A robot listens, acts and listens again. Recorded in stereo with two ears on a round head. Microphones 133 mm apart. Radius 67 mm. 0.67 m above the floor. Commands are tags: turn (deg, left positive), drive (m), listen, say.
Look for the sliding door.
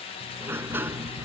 <turn deg="-30"/>
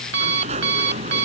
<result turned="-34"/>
<turn deg="-130"/>
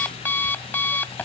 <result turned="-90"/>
<turn deg="-40"/>
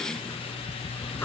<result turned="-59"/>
<turn deg="15"/>
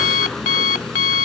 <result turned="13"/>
<say>Found it: a sliding door, straight ahead.</say>